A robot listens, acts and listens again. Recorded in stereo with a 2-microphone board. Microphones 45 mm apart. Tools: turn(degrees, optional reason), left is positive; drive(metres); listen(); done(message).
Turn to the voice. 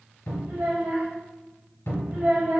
turn(degrees=-45, reason="The child speaking: about 45° right or 135° right.")
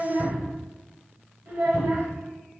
turn(degrees=-70, reason="So it is at 70° right.")
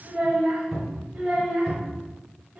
turn(degrees=-35, reason="The child speaking is now 35° right.")
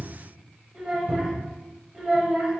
turn(degrees=-10, reason="The child speaking is now 10° right.")
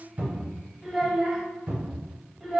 done("Facing the child speaking, under 1 m away.")